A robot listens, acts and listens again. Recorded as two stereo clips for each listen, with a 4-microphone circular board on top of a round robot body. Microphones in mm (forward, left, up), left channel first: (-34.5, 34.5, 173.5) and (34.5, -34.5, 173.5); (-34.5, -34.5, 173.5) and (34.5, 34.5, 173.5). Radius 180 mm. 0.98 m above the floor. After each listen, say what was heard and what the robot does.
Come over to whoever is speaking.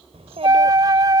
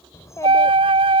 The child speaking: 75° right. Turn 75° right.
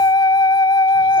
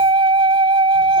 Keep listening.
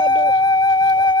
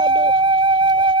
Keep listening.
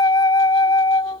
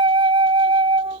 I heard a child speaking from this way, but can't make it out now. I did not reach it.